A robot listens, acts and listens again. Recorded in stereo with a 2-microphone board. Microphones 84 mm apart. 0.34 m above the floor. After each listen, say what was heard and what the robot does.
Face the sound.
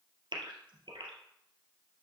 The gasp: about 70° right or 110° right. Turn 70° right.
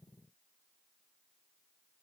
Keep listening.
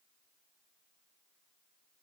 I heard a gasp, but can't make it out now. It was about straight ahead or 40° right.